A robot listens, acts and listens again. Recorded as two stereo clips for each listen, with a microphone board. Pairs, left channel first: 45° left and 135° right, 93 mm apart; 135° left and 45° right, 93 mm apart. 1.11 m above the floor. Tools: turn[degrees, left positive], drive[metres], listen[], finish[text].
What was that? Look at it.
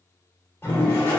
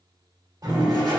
Thought: The toilet flushing: 10° right.
Action: turn[-10]
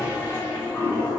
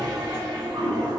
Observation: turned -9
Action: finish[Facing the toilet flushing, 1 to 2 m away.]